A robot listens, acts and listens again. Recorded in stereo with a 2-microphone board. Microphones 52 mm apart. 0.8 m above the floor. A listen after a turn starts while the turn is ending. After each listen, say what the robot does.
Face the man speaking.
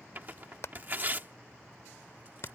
Keep listening.
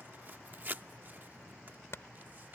Keep listening.
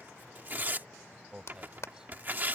Turn 15° right.
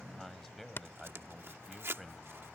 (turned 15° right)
Turn 30° left.
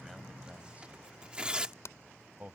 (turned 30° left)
Turn 30° right.
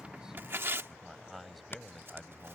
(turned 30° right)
Facing the man speaking.